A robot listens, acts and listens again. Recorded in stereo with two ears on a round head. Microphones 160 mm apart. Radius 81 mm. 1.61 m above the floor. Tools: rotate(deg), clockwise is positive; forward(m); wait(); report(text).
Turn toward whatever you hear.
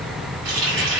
rotate(55)
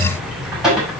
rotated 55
report("Found it: a running tap, straight ahead.")